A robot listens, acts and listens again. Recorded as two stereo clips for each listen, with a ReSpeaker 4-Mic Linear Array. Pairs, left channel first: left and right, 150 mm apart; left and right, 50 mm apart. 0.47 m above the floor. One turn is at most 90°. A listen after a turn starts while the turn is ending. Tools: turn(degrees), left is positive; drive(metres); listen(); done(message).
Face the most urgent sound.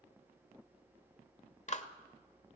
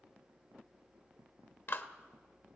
listen()
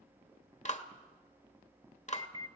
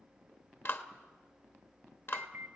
turn(degrees=-35)
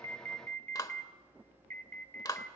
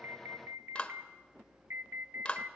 turn(degrees=-90)
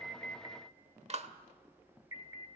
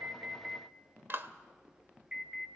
turn(degrees=-25)
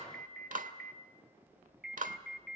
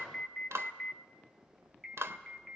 done("Found it: an alarm, straight ahead.")